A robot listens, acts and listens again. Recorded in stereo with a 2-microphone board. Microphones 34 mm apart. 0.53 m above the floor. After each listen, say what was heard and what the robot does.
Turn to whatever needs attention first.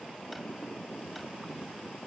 Keep listening.
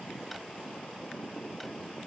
Keep listening.
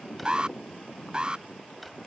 The alarm: about 25° right or 155° right. Turn 25° right.
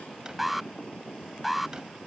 Found it: an alarm, straight ahead.